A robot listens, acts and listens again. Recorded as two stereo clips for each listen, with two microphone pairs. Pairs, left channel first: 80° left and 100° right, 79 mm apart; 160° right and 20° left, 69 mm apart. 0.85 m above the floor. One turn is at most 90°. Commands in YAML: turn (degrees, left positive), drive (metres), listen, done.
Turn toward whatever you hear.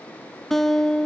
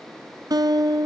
done: "Found it: a guitar, straight ahead."